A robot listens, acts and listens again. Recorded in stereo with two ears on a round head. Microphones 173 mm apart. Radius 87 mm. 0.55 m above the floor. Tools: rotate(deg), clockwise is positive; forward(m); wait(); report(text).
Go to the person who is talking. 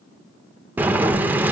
wait()
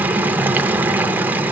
wait()
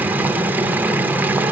report("I can't make out anyone speaking, only boiling.")